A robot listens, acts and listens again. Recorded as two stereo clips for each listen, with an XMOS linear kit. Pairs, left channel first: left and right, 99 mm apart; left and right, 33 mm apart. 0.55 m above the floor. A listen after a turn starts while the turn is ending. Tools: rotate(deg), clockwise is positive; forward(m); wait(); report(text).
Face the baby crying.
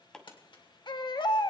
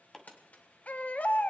rotate(-55)
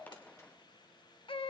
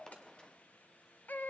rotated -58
rotate(-70)
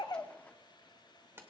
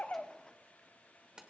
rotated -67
wait()
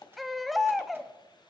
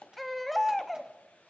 report("Facing the baby crying.")